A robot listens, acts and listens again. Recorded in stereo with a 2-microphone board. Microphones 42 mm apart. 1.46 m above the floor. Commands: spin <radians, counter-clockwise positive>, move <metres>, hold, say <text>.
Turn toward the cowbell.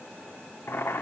hold
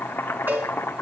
spin -0.79
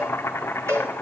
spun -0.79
spin -1.48
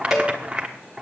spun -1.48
say Found it: a cowbell, straight ahead.